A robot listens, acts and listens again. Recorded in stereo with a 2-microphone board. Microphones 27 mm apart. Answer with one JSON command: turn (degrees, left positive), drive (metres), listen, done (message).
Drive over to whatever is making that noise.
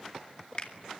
{"turn": 40}
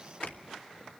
{"listen": true}
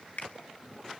{"turn": 100}
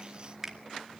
{"turn": -10}
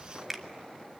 {"drive": 1.0}
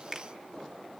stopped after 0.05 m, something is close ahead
{"done": "Blocked. The finger snap is further on, straight ahead."}